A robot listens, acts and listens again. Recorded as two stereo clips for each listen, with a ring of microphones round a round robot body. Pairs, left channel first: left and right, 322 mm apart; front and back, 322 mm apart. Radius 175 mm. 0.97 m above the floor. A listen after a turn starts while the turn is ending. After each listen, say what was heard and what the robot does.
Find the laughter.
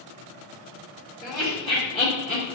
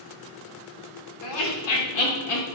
The laughter: 20° left. Turn 20° left.
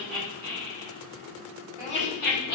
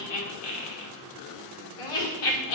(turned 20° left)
The laughter is now 25° left. Turn 25° left.
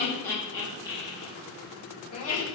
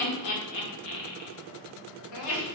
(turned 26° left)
The laughter is now 20° left. Turn 20° left.
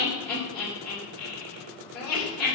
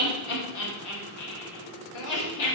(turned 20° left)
Facing the laughter.